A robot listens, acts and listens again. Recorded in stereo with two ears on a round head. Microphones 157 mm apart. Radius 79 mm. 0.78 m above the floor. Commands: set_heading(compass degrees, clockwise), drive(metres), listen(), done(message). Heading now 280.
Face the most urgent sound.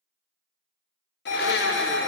set_heading(220)
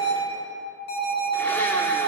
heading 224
set_heading(159)
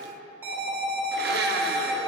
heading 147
set_heading(162)
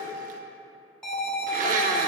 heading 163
done("Found it: an alarm, straight ahead, 2 to 4 m away.")